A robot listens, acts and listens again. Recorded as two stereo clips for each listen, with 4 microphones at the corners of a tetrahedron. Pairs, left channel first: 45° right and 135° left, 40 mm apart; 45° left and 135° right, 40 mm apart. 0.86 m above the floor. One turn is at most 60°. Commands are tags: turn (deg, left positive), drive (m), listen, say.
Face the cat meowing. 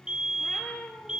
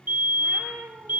<turn deg="-60"/>
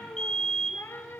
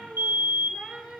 <turn deg="-55"/>
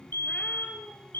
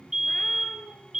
<listen/>
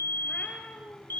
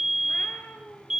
<turn deg="10"/>
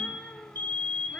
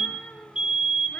<turn deg="10"/>
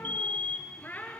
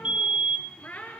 <say>Facing the cat meowing.</say>